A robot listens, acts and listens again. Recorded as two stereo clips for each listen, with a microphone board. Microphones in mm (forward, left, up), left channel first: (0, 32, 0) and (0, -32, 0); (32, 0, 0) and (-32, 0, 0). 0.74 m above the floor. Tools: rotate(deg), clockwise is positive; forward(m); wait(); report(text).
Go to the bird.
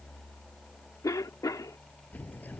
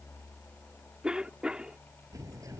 rotate(-150)
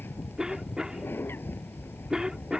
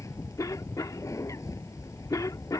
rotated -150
rotate(-35)
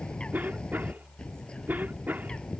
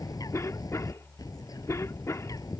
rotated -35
rotate(-15)
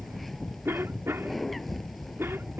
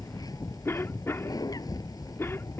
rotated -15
forward(1.0)
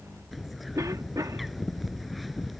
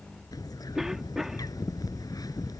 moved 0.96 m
forward(1.0)
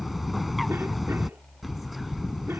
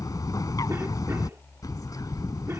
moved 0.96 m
forward(1.0)
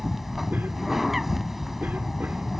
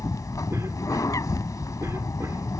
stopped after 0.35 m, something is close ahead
report("Arrived at the bird, straight ahead.")